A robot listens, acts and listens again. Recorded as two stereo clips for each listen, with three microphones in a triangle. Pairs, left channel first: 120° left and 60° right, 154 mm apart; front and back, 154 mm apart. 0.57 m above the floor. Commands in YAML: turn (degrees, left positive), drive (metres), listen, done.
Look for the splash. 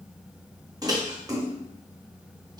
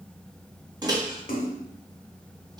done: "Facing the splash."